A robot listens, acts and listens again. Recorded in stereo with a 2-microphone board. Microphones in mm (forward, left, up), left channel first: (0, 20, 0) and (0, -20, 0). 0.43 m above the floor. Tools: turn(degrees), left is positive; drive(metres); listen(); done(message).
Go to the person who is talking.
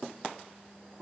listen()
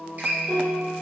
listen()
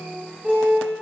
done("I can't make out anyone speaking to turn to.")